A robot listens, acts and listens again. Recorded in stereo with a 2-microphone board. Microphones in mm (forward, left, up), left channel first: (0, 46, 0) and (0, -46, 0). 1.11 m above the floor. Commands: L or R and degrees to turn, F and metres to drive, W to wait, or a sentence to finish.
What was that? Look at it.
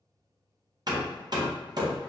R50
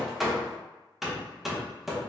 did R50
Found it: hammering, straight ahead.